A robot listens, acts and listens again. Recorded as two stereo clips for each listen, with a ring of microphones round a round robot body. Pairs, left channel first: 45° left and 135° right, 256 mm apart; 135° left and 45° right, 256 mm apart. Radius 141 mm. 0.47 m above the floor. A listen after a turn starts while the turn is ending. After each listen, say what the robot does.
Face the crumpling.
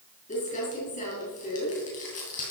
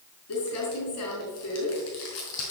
Turn 105° left.
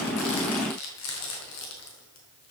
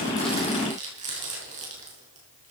Turn 20° left.
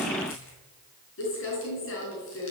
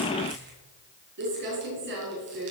Facing the crumpling, over 4 m away.